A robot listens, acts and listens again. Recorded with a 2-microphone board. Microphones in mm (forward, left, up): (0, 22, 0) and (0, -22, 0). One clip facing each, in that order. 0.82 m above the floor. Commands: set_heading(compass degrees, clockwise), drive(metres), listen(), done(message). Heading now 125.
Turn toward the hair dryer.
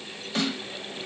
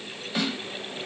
listen()
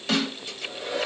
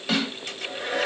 set_heading(190)
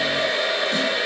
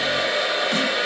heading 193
done("Found it: a hair dryer, straight ahead, 2 to 4 m away.")